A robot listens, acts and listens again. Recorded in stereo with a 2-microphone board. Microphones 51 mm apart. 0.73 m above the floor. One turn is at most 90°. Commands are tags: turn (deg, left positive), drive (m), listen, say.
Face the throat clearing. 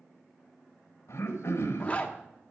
<turn deg="65"/>
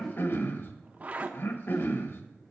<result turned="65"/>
<turn deg="50"/>
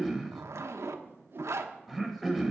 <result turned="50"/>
<say>Found it: throat clearing, straight ahead, 1 to 2 m away.</say>